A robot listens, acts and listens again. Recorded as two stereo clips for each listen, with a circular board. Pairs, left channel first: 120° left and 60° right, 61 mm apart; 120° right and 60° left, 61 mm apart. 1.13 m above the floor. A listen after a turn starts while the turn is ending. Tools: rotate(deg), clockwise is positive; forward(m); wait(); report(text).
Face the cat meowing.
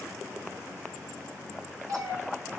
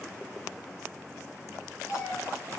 rotate(85)
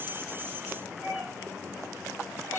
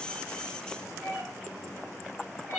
rotate(10)
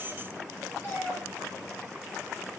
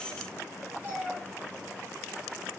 report("Found it: a cat meowing, straight ahead.")